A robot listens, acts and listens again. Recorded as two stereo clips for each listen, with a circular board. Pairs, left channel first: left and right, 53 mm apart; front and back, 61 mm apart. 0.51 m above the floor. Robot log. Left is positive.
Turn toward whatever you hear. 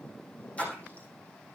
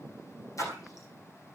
note: The splash: 25° left.
cmd yaw +25
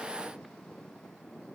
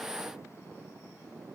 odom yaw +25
end: Facing where the splash came from. I can't hear it now.